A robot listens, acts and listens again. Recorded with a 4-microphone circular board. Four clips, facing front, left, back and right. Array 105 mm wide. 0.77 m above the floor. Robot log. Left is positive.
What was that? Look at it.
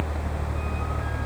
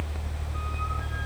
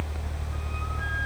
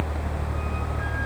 cmd idle
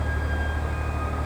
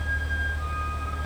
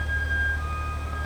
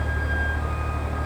cmd idle
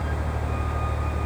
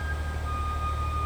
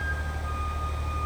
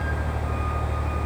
end: I can't make out anything.